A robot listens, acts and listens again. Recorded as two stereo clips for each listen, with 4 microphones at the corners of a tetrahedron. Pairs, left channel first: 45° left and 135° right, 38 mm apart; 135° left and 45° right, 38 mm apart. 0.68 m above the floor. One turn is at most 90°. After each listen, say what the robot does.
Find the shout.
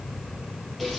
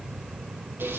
Keep listening.
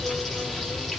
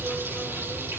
Keep listening.
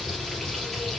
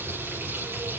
I can't make out a shout to turn to.